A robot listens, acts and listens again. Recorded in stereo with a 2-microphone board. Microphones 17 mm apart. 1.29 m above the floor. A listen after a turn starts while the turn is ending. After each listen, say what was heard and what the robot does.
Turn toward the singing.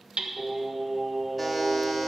The singing: about 20° right or 160° right. Turn 20° right.
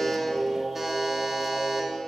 The singing: about 40° right or 140° right. Turn 40° right.
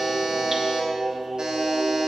So it is at 120° right. Turn 120° right.
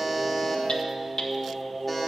The singing is now 10° left. Turn 10° left.
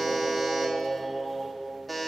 Found it: singing, straight ahead.